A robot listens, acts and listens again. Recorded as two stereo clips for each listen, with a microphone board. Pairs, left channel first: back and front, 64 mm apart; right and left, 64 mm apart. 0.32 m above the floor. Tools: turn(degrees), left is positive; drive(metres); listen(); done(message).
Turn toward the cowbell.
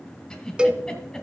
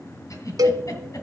turn(degrees=75)
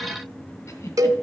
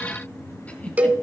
turn(degrees=25)
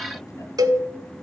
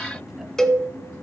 done("Found it: a cowbell, straight ahead.")